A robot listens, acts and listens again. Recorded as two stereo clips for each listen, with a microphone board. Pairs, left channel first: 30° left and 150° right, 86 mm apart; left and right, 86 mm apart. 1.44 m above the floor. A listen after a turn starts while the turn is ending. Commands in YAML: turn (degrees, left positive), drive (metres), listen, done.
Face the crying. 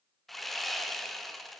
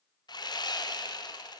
listen: true
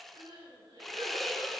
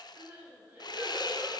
turn: -160
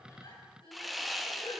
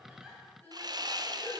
turn: 20
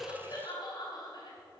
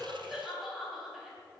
done: "Found it: crying, straight ahead, over 4 m away."